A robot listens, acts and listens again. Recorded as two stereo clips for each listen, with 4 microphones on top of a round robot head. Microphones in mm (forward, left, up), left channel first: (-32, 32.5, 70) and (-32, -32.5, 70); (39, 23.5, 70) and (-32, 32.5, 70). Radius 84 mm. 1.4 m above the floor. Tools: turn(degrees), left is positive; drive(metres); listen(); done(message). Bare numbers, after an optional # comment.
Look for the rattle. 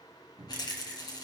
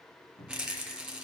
# The rattle: 90° left.
turn(90)
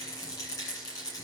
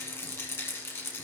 # The rattle is now 45° left.
turn(45)
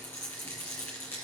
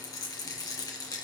# The rattle is now 25° left.
turn(25)
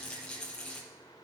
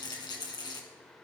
# The rattle is now 10° left.
turn(10)
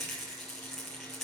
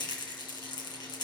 done("Found it: a rattle, straight ahead.")